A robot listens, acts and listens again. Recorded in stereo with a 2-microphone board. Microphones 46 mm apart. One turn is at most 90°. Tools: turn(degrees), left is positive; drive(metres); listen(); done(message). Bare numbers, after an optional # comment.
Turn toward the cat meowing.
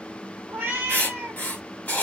# The cat meowing: about 50° right or 130° right.
turn(-50)
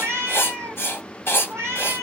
# So it is at 80° right.
turn(-80)
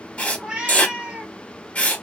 # The cat meowing is now 25° right.
turn(-25)
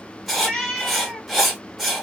done("Facing the cat meowing, under 1 m away.")